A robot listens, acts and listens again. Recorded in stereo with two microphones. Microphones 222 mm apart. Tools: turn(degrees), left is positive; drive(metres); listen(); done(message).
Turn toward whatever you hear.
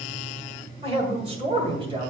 turn(degrees=-25)
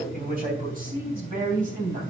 turn(degrees=-40)
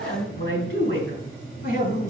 turn(degrees=-110)
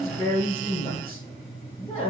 turn(degrees=30)
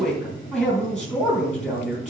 done("Facing the man speaking.")